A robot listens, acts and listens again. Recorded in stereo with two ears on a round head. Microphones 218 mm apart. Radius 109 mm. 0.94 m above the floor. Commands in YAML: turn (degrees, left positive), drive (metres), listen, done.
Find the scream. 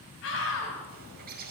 turn: 60
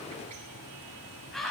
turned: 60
done: "Found it: a scream, straight ahead, over 4 m away."